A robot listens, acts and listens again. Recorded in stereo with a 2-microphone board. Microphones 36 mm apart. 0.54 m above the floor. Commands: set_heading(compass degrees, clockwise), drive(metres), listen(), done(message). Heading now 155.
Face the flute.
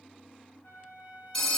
set_heading(85)
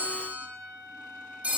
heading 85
set_heading(65)
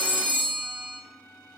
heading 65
listen()
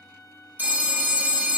done("Found it: a flute, straight ahead, 2 to 4 m away.")